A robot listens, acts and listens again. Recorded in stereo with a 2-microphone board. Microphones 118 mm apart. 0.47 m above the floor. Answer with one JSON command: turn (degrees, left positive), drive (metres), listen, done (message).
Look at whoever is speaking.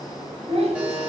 {"turn": -60}
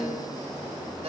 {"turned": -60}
{"listen": true}
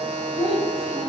{"turn": -60}
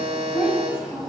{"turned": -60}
{"done": "Facing the child speaking."}